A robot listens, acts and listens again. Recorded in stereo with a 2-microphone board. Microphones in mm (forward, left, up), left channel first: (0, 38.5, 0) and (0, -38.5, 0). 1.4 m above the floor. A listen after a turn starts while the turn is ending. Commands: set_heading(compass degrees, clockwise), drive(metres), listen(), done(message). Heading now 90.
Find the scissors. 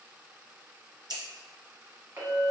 set_heading(155)
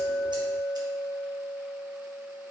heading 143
listen()
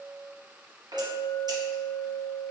listen()
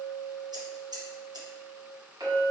set_heading(203)
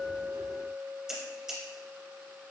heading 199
done("Facing the scissors, 1 to 2 m away.")